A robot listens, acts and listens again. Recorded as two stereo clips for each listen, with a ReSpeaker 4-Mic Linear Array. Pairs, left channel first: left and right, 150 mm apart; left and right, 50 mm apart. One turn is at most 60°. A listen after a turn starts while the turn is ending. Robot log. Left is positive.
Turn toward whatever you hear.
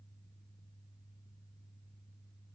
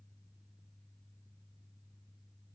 cmd idle
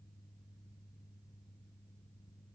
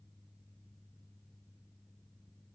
cmd idle
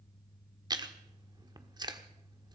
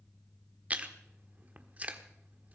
note: The chewing: about 25° right or 155° right.
cmd yaw -25
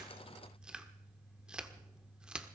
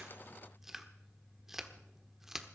end: Found it: chewing, straight ahead, 1 to 2 m away.